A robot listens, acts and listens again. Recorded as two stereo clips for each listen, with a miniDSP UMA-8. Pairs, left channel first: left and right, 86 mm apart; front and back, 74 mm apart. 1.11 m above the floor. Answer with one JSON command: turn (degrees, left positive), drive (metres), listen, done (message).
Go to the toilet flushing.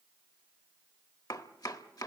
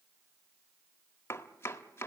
{"listen": true}
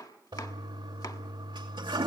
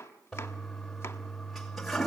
{"turn": -85}
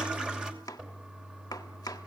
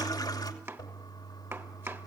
{"turn": -10}
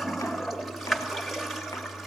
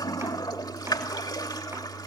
{"drive": 1.0}
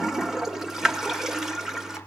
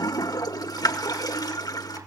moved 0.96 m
{"drive": 1.0}
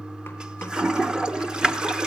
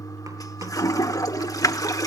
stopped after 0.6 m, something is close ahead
{"turn": -10}
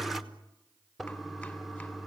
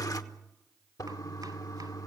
{"done": "Arrived at the toilet flushing, straight ahead."}